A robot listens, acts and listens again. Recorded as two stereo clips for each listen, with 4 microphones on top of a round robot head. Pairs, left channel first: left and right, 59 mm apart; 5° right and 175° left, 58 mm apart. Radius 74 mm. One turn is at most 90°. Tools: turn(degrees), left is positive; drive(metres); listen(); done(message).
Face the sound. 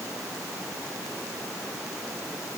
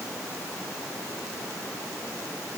listen()
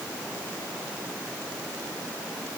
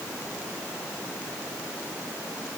listen()
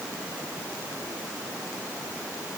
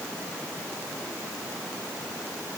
done("I can't make out anything.")